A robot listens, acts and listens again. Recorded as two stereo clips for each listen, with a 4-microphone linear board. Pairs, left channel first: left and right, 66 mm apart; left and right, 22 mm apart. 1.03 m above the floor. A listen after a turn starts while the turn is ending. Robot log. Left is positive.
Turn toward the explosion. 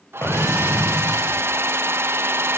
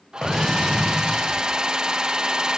note: The explosion: about 45° left or 135° left.
cmd yaw +45
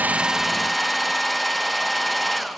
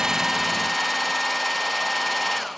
cmd idle
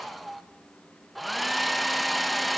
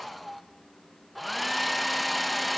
end: I heard an explosion, but can't make it out now. It was about straight ahead or 90° left.